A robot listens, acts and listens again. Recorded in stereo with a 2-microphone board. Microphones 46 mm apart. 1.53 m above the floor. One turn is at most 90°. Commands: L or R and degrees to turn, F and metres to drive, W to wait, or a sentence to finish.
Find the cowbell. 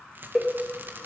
L30
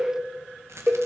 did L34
R35
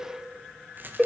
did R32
Found it: a cowbell, straight ahead.